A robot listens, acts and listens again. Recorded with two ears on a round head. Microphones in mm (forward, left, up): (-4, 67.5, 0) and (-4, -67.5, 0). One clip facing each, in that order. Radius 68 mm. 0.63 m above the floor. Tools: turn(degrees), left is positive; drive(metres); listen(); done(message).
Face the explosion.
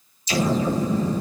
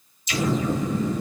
turn(degrees=30)
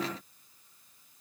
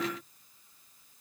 listen()
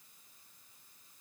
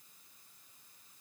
done("I heard an explosion, but can't make it out now. It was about straight ahead or 120° left.")